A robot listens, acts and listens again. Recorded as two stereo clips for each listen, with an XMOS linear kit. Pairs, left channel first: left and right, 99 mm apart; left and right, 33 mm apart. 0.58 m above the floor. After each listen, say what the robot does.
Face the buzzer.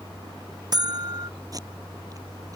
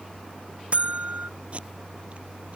Turn 45° right.
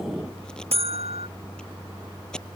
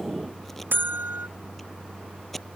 Turn 90° right.
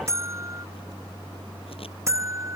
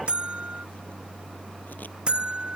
Turn 30° right.
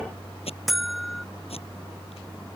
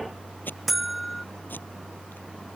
Facing the buzzer.